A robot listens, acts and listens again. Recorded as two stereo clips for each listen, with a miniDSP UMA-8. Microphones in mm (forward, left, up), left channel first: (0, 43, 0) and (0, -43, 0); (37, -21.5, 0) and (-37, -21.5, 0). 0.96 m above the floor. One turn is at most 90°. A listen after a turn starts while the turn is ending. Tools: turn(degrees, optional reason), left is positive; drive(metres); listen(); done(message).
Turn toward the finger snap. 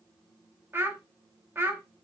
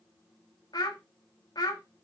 listen()
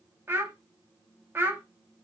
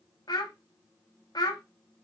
listen()
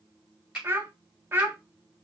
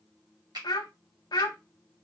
turn(degrees=-90, reason="The finger snap: 170° right.")
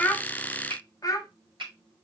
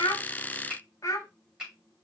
turn(degrees=-90, reason="The finger snap is now 105° right.")
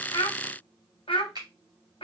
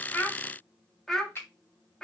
turn(degrees=-65, reason="The finger snap is now 65° right.")
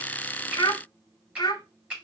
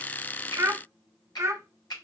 turn(degrees=-15, reason="The finger snap is now 15° right.")
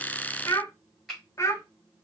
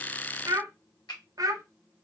done("Found it: a finger snap, straight ahead.")